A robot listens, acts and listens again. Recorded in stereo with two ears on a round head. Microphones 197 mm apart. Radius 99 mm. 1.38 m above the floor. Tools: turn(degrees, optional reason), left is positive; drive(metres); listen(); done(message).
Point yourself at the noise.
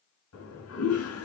turn(degrees=75, reason="The toilet flushing: about 75° left or 105° left.")
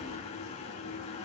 turn(degrees=30, reason="So it is at 30° left.")
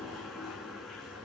done("Found it: a toilet flushing, straight ahead, over 4 m away.")